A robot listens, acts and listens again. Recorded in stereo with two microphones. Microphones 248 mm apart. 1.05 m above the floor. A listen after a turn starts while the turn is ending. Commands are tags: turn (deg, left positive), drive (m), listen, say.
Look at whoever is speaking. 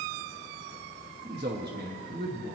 <turn deg="-45"/>
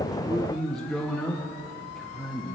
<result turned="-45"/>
<say>Found it: a man speaking, straight ahead.</say>